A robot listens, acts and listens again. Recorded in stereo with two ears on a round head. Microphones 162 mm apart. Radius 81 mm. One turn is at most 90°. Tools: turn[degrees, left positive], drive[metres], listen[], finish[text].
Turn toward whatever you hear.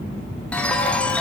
Action: turn[30]
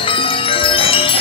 Thought: So it is at 145° left.
Action: turn[90]
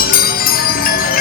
Thought: The chime is now 60° left.
Action: turn[60]
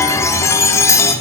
Thought: The chime is now 20° left.
Action: turn[20]
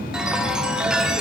Action: finish[Found it: a chime, straight ahead.]